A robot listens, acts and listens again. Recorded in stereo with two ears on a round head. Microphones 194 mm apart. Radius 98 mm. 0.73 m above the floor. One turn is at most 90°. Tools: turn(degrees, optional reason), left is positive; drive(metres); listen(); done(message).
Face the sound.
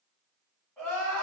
turn(degrees=30)
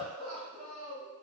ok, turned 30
turn(degrees=90, reason="So it is at 140° left.")
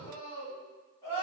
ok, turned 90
turn(degrees=15, reason="The crying is now 15° left.")
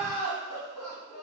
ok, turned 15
done("Facing the crying.")